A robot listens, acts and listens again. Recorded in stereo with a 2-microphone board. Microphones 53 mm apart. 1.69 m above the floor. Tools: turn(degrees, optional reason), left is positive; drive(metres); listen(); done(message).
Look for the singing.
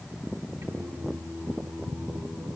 turn(degrees=-70, reason="The singing: about 70° right or 110° right.")
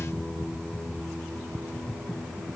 turn(degrees=-10, reason="So it is at 10° right.")
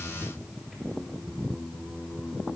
done("Found it: singing, straight ahead, over 4 m away.")